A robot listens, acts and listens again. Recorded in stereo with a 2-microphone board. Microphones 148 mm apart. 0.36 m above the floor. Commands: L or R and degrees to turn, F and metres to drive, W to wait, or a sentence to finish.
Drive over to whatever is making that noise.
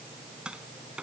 R30
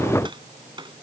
R145
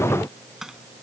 F1.0
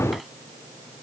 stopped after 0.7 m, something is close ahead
W
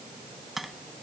Blocked. The tapping is further on, straight ahead.